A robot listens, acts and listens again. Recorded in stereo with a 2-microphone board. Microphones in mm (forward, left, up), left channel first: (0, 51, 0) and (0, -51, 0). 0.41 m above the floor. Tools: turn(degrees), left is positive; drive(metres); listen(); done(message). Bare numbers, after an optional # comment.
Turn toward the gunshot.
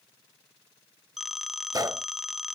# The gunshot: about 40° right or 140° right.
turn(-40)
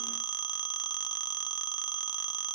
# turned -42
listen()
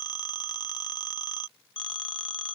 done("I heard a gunshot, but can't make it out now. It was about 5° left or 100° right.")